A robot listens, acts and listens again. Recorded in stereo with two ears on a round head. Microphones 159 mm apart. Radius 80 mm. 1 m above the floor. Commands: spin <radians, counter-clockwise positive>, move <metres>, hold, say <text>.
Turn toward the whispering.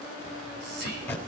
spin -1.05
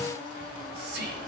spin -1.05
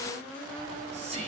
spin -0.61
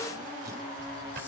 hold
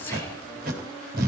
hold
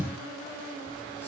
say I heard whispering from this way, but can't make it out now.